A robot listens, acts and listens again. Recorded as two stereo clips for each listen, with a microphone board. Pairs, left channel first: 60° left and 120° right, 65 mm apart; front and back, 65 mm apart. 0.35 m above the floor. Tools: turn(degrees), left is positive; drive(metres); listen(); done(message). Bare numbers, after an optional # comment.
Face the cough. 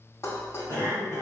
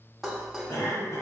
# The cough: 15° left.
turn(15)
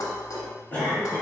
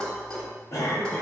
done("Facing the cough, 1 to 2 m away.")